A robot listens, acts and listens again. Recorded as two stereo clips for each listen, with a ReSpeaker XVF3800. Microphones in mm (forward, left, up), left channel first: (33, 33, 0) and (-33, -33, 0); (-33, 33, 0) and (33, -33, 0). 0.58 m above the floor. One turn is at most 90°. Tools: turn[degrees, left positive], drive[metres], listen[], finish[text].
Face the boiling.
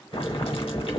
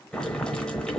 Thought: The boiling: 55° left.
Action: turn[55]
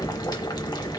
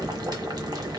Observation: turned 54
Action: finish[Facing the boiling, under 1 m away.]